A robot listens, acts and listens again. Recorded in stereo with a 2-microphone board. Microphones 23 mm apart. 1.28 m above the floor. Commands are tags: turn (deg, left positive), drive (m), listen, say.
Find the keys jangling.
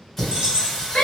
<turn deg="-45"/>
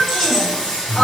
<listen/>
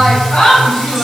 <listen/>
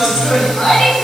<say>I heard keys jangling, but can't make it out now. It was about straight ahead or 90° right.</say>